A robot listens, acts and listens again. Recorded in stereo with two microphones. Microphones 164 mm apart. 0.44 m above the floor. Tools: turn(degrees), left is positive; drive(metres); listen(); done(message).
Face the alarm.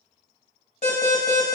turn(degrees=50)
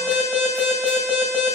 done("Found it: an alarm, straight ahead, 1 to 2 m away.")